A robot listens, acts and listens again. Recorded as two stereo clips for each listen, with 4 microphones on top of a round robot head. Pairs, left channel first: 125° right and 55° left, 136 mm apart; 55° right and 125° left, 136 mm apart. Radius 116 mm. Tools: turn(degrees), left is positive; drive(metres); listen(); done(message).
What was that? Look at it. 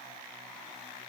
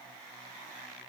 listen()
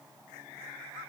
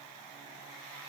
listen()
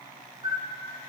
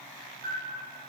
turn(degrees=115)
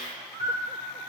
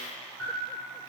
turn(degrees=25)
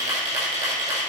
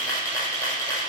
turn(degrees=15)
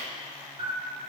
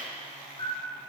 done("Facing the camera shutter.")